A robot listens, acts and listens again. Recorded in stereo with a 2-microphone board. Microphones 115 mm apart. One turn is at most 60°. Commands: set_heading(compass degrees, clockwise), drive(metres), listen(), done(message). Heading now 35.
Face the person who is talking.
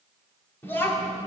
set_heading(20)
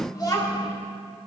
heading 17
set_heading(317)
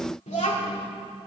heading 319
set_heading(259)
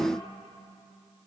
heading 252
set_heading(227)
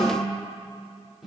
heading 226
done("Facing the child speaking.")